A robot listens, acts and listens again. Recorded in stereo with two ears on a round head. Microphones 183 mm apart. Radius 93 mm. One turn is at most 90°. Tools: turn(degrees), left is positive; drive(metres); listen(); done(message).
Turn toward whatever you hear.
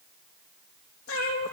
turn(degrees=90)
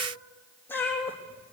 turn(degrees=10)
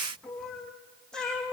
done("Found it: a cat meowing, straight ahead, 2 to 4 m away.")